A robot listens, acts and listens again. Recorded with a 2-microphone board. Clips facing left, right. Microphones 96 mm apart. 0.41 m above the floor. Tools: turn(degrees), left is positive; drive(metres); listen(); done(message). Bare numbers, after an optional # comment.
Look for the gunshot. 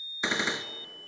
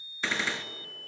# The gunshot: about 20° left or 160° left.
turn(20)
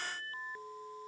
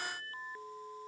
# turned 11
listen()
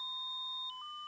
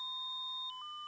done("I heard a gunshot, but can't make it out now. It was about 5° left or 150° left.")